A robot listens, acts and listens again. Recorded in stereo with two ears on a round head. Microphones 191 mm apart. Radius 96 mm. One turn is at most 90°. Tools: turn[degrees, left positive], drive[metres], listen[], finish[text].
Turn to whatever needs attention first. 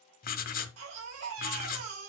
Action: turn[-90]
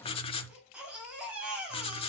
Action: finish[Facing the baby crying.]